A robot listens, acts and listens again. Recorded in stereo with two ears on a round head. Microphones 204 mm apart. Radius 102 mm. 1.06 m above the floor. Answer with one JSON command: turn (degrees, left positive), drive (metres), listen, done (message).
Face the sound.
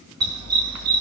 {"turn": -90}
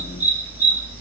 {"done": "Found it: a dog barking, straight ahead, over 4 m away."}